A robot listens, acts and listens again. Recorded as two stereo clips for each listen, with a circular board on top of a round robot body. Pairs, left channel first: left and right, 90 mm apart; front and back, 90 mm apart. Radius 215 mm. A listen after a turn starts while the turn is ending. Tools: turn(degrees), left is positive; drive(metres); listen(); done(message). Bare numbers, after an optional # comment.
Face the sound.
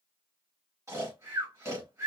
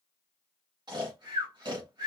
# The snoring: 145° right.
turn(-145)
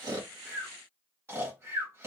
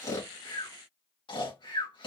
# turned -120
# The snoring is now 25° right.
turn(-25)
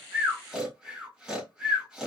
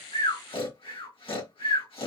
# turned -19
done("Found it: snoring, straight ahead.")